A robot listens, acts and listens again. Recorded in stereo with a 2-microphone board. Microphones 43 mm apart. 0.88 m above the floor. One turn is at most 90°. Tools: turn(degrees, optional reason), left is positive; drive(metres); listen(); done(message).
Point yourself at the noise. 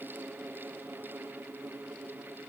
listen()
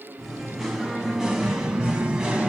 turn(degrees=-20, reason="The singing: about 20° right or 160° right.")
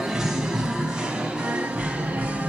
turn(degrees=-30, reason="The singing: about 30° right or 150° right.")
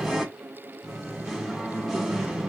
done("Found it: singing, straight ahead, 1 to 2 m away.")